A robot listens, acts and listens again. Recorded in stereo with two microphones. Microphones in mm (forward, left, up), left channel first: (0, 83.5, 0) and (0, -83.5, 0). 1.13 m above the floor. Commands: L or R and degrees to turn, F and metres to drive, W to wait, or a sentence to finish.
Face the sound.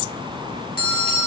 L65
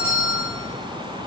L15
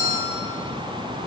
L10
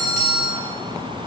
Found it: a bell, straight ahead.